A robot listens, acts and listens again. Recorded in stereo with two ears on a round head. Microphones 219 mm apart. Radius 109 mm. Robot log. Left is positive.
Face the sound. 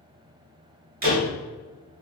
note: The door slam: about 40° right or 140° right.
cmd yaw -40
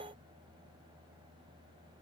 cmd idle
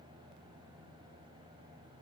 end: I heard a door slam, but can't make it out now. It was about straight ahead or 100° right.